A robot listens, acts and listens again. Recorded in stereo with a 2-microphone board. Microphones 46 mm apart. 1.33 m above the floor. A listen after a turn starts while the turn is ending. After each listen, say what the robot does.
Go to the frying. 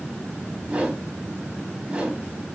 Keep listening.
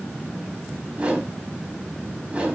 Keep listening.
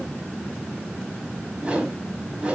I can't make out frying, only a whoosh.